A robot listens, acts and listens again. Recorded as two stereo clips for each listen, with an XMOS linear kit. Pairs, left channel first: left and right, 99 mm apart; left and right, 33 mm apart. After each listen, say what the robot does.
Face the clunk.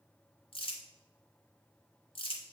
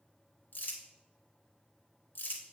Keep listening.
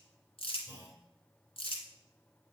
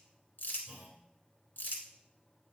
Turn 35° right.
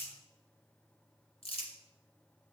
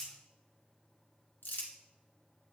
Keep listening.
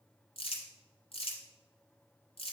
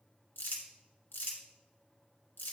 I heard a clunk, but can't make it out now. It was about straight ahead or 110° right.